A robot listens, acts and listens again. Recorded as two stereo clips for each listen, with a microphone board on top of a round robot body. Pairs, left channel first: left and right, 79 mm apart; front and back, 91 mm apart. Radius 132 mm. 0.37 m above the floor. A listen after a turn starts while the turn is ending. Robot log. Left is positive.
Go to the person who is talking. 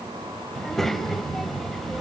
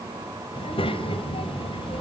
cmd fwd 1.0
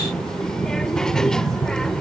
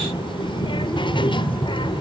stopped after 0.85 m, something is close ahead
note: The child speaking is now 10° left.
cmd yaw +10
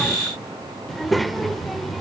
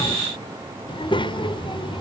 end: Arrived at the child speaking, straight ahead.